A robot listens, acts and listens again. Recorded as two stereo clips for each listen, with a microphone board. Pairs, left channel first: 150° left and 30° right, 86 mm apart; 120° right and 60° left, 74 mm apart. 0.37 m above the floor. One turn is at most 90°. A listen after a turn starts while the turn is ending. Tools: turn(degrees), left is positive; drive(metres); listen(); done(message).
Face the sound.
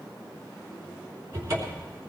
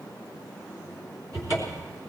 turn(degrees=25)
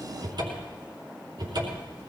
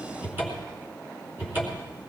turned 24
done("Found it: a cupboard door, straight ahead.")